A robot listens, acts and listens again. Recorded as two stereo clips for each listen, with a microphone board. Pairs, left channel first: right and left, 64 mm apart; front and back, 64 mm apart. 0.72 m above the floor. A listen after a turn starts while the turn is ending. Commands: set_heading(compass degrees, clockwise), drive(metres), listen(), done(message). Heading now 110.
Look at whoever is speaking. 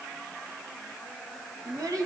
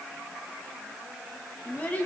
set_heading(45)
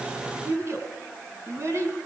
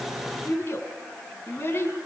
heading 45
set_heading(350)
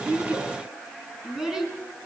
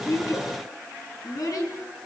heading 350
done("Facing the child speaking.")